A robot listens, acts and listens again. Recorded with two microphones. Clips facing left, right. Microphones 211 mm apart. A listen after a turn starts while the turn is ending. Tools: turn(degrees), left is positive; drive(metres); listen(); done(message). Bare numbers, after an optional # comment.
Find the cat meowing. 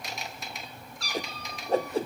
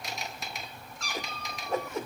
# The cat meowing: about 35° left or 145° left.
turn(35)
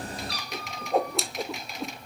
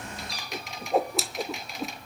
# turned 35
# So it is at 105° left.
turn(105)
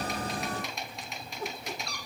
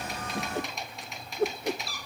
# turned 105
done("Facing the cat meowing, 2 to 4 m away.")